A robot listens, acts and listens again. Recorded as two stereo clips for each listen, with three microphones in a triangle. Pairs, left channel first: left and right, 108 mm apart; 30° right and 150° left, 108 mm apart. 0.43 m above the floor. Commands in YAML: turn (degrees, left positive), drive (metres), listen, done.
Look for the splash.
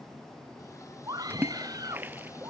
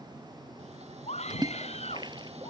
turn: -160
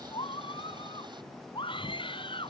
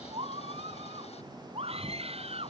done: "Facing where the splash came from. I can't hear it now."